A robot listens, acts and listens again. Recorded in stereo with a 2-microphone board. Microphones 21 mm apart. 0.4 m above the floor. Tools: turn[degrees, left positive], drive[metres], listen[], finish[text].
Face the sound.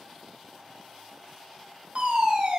Thought: The fire alarm: about 60° right or 120° right.
Action: turn[-60]
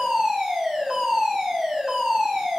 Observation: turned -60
Thought: So it is at 40° right.
Action: turn[-40]
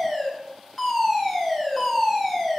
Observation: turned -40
Action: finish[Found it: a fire alarm, straight ahead.]